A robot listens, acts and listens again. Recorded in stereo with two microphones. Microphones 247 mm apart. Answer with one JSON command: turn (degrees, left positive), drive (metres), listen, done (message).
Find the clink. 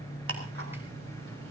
{"listen": true}
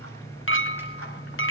{"turn": 55}
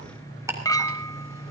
{"turn": 15}
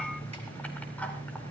{"listen": true}
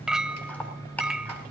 {"done": "Facing the clink."}